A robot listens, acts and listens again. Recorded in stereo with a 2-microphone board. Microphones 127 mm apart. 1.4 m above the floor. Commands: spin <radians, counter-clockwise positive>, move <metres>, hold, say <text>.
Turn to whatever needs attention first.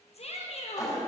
spin 0.96
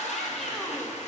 hold
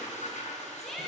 say Found it: a shout, straight ahead, under 1 m away.